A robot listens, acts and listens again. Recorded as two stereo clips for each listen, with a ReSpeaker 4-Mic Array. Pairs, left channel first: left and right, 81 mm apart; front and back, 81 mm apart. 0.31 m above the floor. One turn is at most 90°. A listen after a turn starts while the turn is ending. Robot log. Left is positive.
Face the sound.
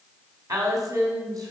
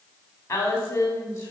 note: The woman speaking: 55° right.
cmd yaw -55
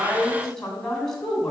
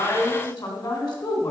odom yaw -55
end: Facing the woman speaking.